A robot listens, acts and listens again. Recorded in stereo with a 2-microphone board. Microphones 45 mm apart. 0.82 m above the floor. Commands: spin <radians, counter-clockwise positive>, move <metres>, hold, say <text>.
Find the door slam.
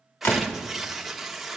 spin 1.13
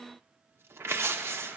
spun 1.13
hold
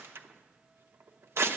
say I heard a door slam, but can't make it out now. It was about straight ahead or 50° left.